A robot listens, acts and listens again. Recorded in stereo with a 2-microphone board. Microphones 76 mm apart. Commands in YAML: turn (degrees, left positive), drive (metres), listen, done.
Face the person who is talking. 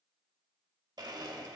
listen: true
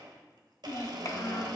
turn: 45
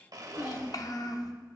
turn: 80
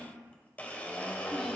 listen: true
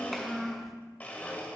done: "Facing the child speaking, under 1 m away."